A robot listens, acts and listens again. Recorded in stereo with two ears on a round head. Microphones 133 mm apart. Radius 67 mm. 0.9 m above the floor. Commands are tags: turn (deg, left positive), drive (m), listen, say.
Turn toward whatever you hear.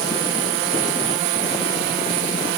<listen/>
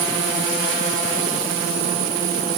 <listen/>
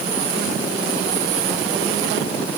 <say>I can't make out anything.</say>